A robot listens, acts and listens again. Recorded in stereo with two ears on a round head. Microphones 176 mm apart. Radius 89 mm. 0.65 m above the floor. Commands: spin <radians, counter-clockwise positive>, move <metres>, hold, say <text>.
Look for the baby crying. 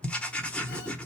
hold
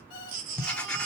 spin -0.79
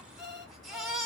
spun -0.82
say Facing the baby crying, 1 to 2 m away.